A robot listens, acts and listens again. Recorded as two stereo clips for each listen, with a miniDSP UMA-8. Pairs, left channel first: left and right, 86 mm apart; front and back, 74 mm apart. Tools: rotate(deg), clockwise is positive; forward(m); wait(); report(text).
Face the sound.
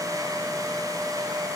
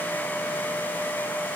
wait()
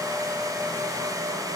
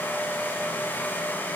wait()
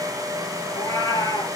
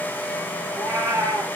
rotate(-130)
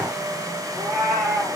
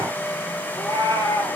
report("Facing the cat meowing.")